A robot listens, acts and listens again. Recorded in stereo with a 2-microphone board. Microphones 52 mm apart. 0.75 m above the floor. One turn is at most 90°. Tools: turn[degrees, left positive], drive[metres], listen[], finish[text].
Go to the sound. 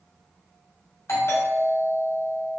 Thought: The doorbell: about 65° left or 115° left.
Action: turn[65]
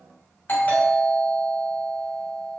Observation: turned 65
Thought: So it is at 40° left.
Action: turn[40]
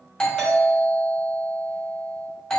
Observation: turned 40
Thought: The doorbell is now 15° left.
Action: turn[15]
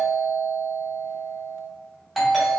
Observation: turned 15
Action: drive[1.0]
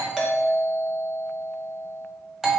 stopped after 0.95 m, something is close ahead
Action: finish[Arrived at the doorbell, straight ahead.]